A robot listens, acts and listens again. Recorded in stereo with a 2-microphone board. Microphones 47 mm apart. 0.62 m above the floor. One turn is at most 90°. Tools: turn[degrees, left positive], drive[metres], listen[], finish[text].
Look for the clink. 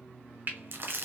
Action: listen[]
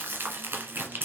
Action: listen[]
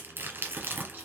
Action: finish[I can't make out a clink to turn to.]